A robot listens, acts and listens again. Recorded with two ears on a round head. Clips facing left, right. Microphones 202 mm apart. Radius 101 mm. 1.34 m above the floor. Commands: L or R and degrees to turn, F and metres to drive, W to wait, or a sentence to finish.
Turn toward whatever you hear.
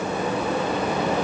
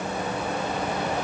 W
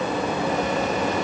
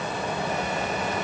W
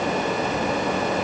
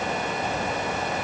I can't make out anything.